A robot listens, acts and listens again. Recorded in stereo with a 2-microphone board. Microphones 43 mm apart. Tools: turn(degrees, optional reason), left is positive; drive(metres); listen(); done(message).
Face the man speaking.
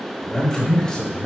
turn(degrees=20, reason="The man speaking: about 20° left or 160° left.")
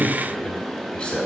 turn(degrees=25, reason="The man speaking: about 25° left or 155° left.")
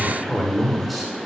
done("Found it: a man speaking, straight ahead, 1 to 2 m away.")